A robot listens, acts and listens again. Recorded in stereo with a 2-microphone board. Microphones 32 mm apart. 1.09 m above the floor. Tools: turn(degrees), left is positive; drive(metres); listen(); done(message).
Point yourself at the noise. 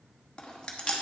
turn(degrees=25)
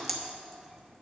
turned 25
done("Facing the chewing.")